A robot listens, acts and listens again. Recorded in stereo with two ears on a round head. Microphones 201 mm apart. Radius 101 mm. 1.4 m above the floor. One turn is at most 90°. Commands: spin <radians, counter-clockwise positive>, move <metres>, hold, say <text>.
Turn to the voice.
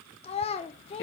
spin 0.44
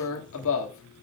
hold
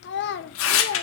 spin 1.57
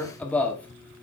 spin 0.61
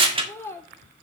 spin 0.17
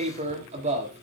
hold
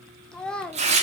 say Found it: a child speaking, straight ahead.